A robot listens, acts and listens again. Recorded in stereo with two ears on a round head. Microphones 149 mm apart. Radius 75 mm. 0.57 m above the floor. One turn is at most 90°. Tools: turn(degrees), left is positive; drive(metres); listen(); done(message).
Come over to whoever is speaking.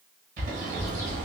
turn(degrees=65)
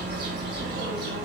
turn(degrees=50)
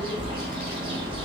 turn(degrees=10)
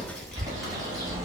drive(metres=1.0)
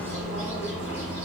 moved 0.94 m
drive(metres=1.0)
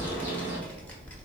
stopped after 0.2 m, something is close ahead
turn(degrees=10)
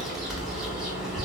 done("I am next to the child speaking.")